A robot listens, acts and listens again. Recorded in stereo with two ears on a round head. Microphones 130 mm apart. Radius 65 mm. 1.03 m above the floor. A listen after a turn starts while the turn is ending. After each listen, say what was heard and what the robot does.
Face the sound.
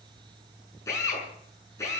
The drill: about 20° left or 160° left. Turn 20° left.
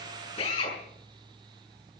So it is at 135° left. Turn 135° left.
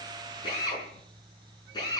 The drill is now 30° left. Turn 30° left.
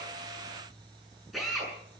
Found it: a drill, straight ahead, over 4 m away.